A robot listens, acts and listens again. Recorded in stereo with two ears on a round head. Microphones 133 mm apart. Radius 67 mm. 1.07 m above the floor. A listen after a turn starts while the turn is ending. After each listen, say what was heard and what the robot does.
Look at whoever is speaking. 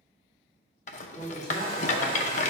Turn 30° left.
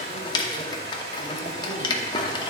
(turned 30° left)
Keep listening.
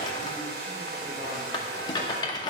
Keep listening.
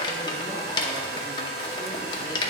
I heard a man speaking, but can't make it out now. It was about 25° right or 145° left.